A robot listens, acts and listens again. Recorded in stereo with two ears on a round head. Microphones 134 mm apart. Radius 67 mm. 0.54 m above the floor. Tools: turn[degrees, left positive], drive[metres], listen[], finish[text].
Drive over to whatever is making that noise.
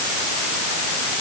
Action: listen[]
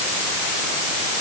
Action: listen[]
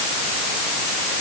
Action: finish[I can't make out anything.]